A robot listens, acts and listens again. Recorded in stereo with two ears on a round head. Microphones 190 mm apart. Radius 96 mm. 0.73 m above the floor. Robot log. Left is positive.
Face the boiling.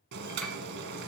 note: The boiling: about 55° right or 125° right.
cmd yaw -55
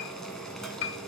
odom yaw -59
end: Found it: boiling, straight ahead, 1 to 2 m away.